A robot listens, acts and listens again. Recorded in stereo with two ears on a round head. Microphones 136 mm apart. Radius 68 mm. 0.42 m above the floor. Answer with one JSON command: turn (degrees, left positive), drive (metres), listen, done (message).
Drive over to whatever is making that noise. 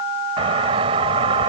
{"turn": -40}
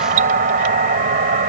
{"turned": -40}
{"turn": -95}
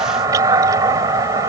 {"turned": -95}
{"turn": -30}
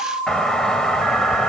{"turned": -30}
{"drive": 1.0}
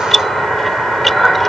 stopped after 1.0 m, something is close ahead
{"done": "I am next to the doorbell."}